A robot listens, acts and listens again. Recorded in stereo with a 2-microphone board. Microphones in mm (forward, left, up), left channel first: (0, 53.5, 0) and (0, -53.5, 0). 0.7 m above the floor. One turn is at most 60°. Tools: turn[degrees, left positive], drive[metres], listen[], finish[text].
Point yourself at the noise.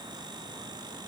Action: listen[]
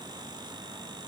Action: listen[]
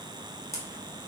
Thought: The camera shutter: about 25° left or 155° left.
Action: turn[25]
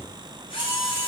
Thought: So it is at 125° left.
Action: turn[60]
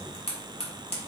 Thought: The camera shutter is now 70° left.
Action: turn[60]
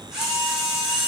Action: finish[Facing the camera shutter, 1 to 2 m away.]